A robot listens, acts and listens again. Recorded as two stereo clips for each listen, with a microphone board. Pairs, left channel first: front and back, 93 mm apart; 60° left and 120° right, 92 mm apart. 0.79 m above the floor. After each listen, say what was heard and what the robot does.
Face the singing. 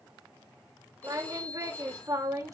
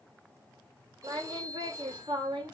The singing: 130° right. Turn 130° right.
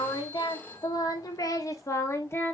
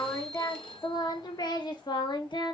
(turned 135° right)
The singing is now 60° left. Turn 60° left.
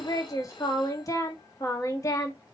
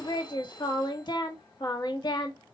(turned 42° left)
The singing is now 45° left. Turn 45° left.
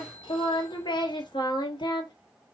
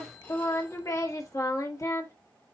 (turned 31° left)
The singing is now 15° left. Turn 15° left.
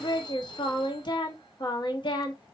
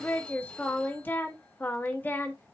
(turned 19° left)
Facing the singing.